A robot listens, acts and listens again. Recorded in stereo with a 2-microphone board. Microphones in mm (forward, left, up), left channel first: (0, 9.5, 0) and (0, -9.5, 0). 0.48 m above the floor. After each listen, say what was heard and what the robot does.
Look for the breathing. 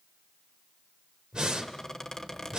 The breathing: about 50° right or 130° right. Turn 50° right.
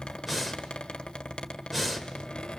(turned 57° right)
So it is at 10° right. Turn 10° right.
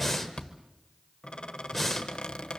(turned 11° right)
Facing the breathing, 2 to 4 m away.